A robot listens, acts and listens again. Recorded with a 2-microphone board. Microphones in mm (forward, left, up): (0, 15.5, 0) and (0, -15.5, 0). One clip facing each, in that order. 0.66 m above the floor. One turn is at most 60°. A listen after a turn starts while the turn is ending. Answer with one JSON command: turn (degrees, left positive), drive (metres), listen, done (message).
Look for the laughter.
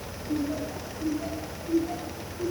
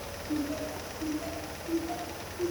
{"turn": 30}
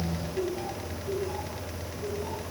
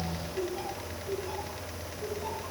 {"turn": -25}
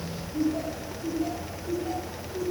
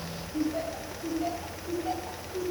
{"turn": -25}
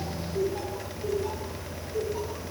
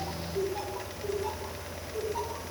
{"done": "Facing the laughter, 2 to 4 m away."}